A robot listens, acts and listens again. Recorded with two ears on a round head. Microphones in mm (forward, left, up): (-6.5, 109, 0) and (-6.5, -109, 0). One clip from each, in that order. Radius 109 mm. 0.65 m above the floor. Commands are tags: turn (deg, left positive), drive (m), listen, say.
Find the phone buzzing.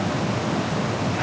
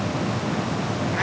<listen/>
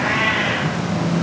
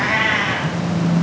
<turn deg="-30"/>
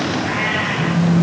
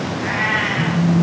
<turn deg="-145"/>
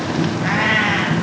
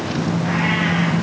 <turn deg="-45"/>
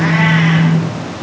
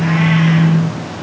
<turn deg="10"/>
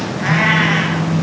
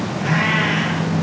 <say>Facing the phone buzzing, 2 to 4 m away.</say>